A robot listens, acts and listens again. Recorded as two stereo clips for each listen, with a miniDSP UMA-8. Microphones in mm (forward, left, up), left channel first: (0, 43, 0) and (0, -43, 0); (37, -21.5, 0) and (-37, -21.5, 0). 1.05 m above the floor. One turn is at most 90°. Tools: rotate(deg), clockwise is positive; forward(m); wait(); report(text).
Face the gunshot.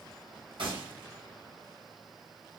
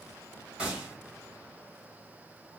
rotate(90)
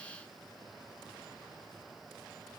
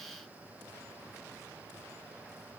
rotate(15)
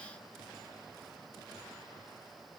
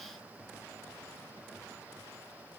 report("Facing where the gunshot came from. I can't hear it now.")